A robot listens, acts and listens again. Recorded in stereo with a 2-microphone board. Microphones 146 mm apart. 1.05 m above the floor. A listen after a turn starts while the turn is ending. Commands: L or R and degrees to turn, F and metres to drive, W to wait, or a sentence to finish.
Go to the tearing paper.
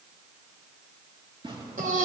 R35
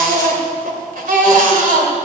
W
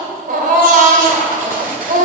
W
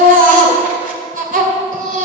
I heard tearing paper, but can't make it out now. It was about straight ahead or 110° right. I did not reach it.